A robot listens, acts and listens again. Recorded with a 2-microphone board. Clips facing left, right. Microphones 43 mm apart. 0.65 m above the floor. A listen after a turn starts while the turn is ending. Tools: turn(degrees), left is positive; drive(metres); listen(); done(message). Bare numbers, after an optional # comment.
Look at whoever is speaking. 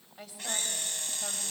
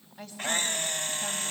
turn(30)
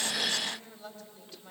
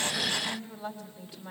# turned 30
# So it is at 15° right.
turn(-15)
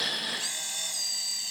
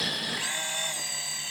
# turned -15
listen()
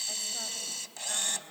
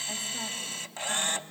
listen()
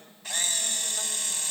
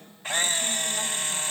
done("I heard a woman speaking from this way, but can't make it out now.")